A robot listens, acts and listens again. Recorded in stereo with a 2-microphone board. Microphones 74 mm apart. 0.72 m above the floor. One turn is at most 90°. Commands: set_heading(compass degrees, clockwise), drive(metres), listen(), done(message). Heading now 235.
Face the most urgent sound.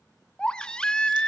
set_heading(205)
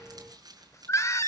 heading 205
set_heading(115)
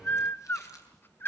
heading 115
set_heading(85)
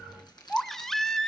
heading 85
done("Found it: a baby crying, straight ahead, under 1 m away.")